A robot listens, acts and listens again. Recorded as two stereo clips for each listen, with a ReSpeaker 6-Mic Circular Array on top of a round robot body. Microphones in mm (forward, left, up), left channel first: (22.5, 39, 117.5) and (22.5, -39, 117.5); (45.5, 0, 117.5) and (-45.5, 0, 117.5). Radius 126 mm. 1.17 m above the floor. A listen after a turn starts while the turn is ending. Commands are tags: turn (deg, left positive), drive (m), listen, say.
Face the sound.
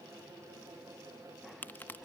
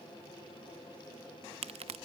<turn deg="160"/>
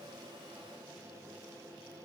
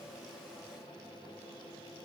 <say>I heard a crack from this way, but can't make it out now.</say>